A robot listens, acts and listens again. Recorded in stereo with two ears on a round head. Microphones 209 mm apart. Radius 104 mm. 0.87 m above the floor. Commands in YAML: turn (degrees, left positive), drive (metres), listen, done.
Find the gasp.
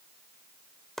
listen: true
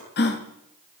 turn: 45
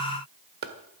listen: true
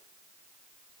done: "I heard a gasp, but can't make it out now. It was about straight ahead or 90° left."